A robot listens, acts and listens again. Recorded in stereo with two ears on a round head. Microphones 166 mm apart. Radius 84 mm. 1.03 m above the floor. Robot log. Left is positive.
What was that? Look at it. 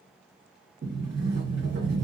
note: The sliding door: about 65° right or 115° right.
cmd yaw -65
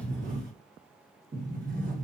note: So it is at 50° right.
cmd yaw -50
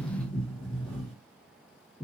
end: Found it: a sliding door, straight ahead, 1 to 2 m away.